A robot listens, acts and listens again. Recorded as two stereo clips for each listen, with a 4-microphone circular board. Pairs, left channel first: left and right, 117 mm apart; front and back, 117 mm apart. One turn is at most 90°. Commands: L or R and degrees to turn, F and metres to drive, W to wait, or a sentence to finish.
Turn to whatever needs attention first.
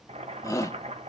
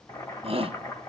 L90
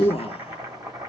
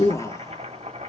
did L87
L65
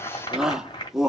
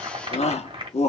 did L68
Facing the shout.